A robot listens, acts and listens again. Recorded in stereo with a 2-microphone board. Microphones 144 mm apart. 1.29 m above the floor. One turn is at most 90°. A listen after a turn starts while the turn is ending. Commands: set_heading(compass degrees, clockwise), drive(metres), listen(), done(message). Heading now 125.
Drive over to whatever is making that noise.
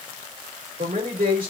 set_heading(200)
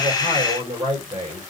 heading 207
set_heading(232)
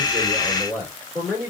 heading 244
set_heading(229)
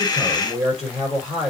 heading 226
drive(1.0)
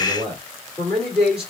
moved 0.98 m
drive(1.0)
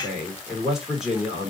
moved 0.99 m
drive(1.0)
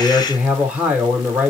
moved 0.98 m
set_heading(236)
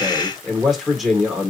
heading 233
drive(1.0)
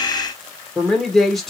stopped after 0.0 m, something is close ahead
done("I am next to the man speaking.")